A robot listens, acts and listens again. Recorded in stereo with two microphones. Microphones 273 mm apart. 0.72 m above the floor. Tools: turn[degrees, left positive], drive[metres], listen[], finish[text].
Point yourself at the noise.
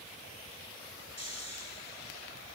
Thought: The snoring: about 65° right or 115° right.
Action: turn[-65]
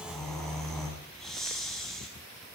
Action: finish[Found it: snoring, straight ahead, over 4 m away.]